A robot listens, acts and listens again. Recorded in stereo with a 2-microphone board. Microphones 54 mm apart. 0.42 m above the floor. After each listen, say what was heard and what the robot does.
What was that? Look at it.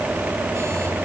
Keep listening.
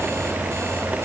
Keep listening.
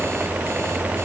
I can't make out anything to turn to.